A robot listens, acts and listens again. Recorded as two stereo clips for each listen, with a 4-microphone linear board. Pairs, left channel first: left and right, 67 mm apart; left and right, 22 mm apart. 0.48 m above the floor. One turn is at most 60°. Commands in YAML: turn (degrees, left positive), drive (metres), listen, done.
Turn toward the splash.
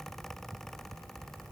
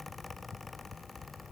listen: true
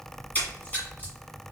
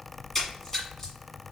turn: 25
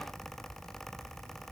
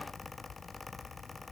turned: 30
listen: true
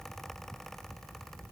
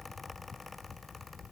done: "I heard a splash, but can't make it out now. It was about 5° right or 125° left."